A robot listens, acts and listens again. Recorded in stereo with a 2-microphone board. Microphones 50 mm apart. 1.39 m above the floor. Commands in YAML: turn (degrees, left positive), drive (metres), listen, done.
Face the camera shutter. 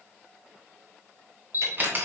turn: -35
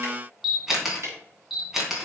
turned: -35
done: "Found it: a camera shutter, straight ahead, 2 to 4 m away."